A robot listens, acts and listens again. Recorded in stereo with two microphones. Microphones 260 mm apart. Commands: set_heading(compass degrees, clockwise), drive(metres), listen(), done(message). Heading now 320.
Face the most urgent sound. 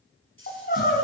set_heading(280)
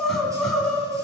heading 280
done("Facing the crying.")